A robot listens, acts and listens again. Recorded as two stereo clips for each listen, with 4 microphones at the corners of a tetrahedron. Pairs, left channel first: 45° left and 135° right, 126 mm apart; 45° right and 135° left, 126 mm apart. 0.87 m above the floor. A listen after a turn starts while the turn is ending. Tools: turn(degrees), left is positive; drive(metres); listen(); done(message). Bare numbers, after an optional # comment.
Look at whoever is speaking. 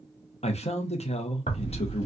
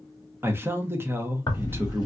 # The man speaking: 65° left.
turn(65)
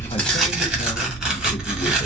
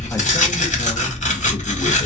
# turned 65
listen()
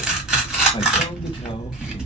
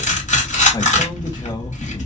listen()
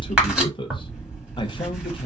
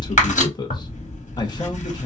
done("Found it: a man speaking, straight ahead.")